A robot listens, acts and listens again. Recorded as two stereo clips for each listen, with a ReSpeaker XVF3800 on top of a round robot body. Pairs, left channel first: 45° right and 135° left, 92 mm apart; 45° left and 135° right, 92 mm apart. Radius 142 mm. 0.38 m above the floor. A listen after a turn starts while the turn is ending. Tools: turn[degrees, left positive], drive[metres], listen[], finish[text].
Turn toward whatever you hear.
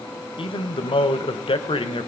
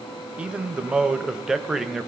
Thought: The man speaking: 50° right.
Action: turn[-50]
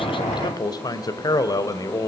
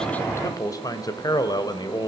Action: finish[Found it: a man speaking, straight ahead, 2 to 4 m away.]